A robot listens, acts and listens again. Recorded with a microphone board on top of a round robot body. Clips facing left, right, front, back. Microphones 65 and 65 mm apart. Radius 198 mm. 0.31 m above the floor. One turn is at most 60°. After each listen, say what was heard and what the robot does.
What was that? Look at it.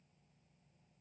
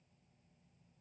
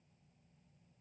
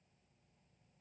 Keep listening.
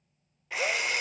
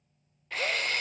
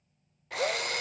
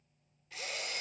The drill: 10° left. Turn 10° left.
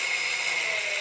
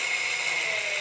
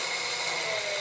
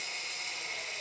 Found it: a drill, straight ahead.